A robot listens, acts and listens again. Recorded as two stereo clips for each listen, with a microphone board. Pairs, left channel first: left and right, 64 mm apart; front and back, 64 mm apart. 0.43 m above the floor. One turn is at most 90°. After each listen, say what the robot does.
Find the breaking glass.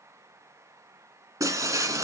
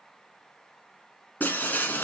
Turn 60° right.
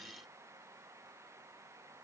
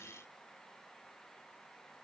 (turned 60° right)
Facing where the breaking glass came from. I can't hear it now.